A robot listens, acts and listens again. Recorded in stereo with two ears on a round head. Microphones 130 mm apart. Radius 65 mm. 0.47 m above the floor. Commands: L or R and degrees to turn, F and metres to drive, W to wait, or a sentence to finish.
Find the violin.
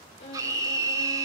L45
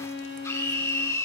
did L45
L90
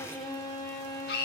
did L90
L25
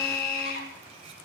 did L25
W
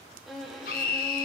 Facing the violin, 2 to 4 m away.